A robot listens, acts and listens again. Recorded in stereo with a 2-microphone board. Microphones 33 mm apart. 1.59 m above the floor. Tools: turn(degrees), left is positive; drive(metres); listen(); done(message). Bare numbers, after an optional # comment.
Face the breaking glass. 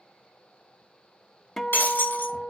turn(90)
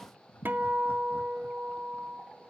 done("Facing where the breaking glass came from. I can't hear it now.")